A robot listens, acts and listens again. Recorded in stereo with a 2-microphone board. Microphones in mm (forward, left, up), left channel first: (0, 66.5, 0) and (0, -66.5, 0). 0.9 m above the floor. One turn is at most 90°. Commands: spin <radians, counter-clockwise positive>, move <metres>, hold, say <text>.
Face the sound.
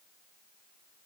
hold
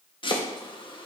spin 0.70
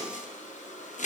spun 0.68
spin 1.57
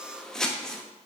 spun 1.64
say Facing the chopping.